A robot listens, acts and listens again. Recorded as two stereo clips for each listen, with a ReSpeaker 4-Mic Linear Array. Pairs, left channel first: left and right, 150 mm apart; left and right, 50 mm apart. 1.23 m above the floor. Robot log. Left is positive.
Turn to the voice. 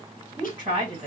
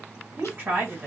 note: The woman speaking: about 35° right or 145° right.
cmd yaw -35
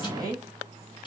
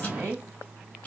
note: So it is at 110° right.
cmd yaw -110
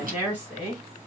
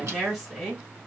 note: The woman speaking is now 10° right.
cmd yaw -10
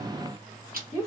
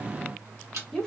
end: Facing the woman speaking.